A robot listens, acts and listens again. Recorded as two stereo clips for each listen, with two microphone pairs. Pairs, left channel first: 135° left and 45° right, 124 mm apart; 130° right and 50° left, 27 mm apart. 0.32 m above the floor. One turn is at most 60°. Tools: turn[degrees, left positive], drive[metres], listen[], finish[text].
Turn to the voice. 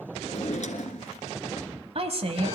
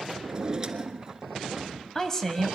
Thought: The woman speaking: 60° right.
Action: turn[-60]
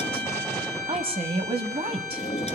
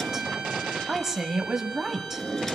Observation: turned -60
Thought: The woman speaking is now 20° right.
Action: turn[-20]
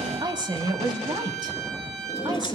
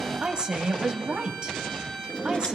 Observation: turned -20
Action: finish[Facing the woman speaking.]